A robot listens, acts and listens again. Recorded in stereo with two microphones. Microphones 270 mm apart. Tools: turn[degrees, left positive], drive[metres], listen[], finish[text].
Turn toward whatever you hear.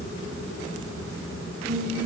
Thought: The singing: about 30° right or 150° right.
Action: turn[-30]
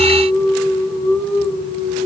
Thought: So it is at 120° right.
Action: turn[-120]
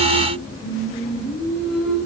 Action: finish[Found it: singing, straight ahead, over 4 m away.]